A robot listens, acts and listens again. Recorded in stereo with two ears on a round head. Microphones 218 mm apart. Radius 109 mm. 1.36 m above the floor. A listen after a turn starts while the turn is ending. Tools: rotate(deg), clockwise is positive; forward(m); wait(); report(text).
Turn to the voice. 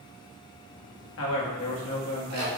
rotate(-55)
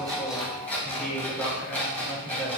report("Facing the man speaking, 1 to 2 m away.")